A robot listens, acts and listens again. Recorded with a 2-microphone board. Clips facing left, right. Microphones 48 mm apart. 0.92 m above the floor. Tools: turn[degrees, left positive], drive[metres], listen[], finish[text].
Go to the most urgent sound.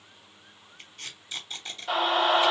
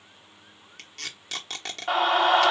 Thought: The scream: about 45° right or 135° right.
Action: turn[-45]
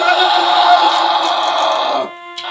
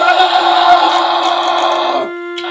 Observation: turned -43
Action: drive[1.0]
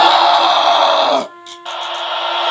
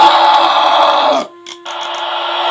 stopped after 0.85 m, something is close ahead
Thought: The scream is now 15° right.
Action: turn[-15]
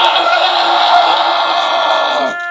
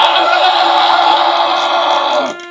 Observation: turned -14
Action: finish[Arrived at the scream, straight ahead.]